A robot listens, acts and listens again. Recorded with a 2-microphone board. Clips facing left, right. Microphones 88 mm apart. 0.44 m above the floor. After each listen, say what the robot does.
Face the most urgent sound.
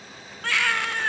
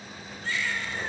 Turn 90° left.
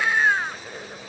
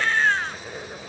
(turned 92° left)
Turn 10° left.
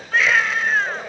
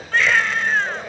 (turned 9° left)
Found it: a baby crying, straight ahead.